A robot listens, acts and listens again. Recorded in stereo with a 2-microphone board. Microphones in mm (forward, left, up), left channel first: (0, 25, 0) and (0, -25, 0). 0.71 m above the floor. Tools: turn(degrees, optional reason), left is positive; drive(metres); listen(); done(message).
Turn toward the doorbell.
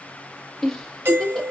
turn(degrees=-45, reason="The doorbell: about 45° right or 135° right.")
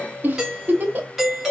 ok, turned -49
done("Facing the doorbell, 1 to 2 m away.")